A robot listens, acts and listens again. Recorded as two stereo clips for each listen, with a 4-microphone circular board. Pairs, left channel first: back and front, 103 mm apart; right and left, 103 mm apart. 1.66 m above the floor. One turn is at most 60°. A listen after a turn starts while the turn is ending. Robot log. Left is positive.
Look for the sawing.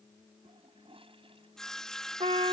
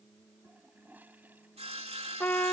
note: The sawing: 95° left.
cmd yaw +60
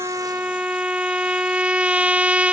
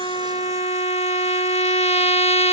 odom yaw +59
note: Nothing new. It was at 35° left.
cmd yaw +35
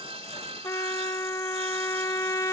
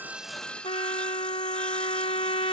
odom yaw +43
note: The sawing is now 10° right.
cmd yaw -10
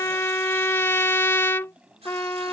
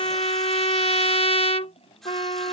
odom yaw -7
end: Found it: sawing, straight ahead.